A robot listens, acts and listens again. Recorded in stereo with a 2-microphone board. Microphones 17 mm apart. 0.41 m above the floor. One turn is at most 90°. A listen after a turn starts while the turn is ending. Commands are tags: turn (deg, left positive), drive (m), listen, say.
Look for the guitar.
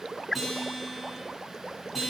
<turn deg="-30"/>
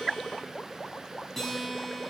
<turn deg="15"/>
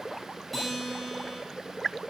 <say>Facing the guitar.</say>